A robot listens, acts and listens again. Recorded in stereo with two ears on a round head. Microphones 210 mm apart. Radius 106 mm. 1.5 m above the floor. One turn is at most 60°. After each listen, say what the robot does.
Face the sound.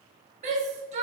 Turn 30° right.
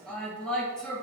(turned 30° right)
Found it: a shout, straight ahead.